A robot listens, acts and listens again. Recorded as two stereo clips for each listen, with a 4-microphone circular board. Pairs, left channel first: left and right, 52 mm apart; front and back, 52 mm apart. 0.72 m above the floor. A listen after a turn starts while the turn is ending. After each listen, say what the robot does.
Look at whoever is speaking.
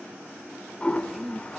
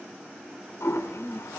Turn 10° right.
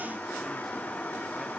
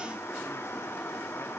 Keep listening.
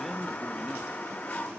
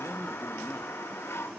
Keep listening.
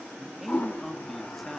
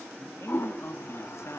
Found it: a man speaking, straight ahead, under 1 m away.